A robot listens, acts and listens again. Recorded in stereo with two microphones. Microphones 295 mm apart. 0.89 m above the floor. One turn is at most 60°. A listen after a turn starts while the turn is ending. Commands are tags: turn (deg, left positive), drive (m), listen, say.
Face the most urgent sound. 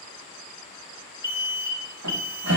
<turn deg="-30"/>
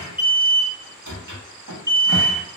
<turn deg="-60"/>
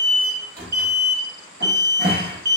<turn deg="-60"/>
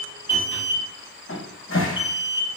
<say>Facing the alarm.</say>